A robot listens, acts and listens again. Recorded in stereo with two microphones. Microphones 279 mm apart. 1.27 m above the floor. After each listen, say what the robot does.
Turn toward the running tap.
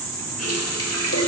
Turn 60° left.
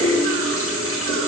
Turn 55° left.
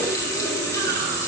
Turn 10° left.
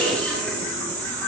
Keep listening.
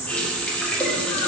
Found it: a running tap, straight ahead.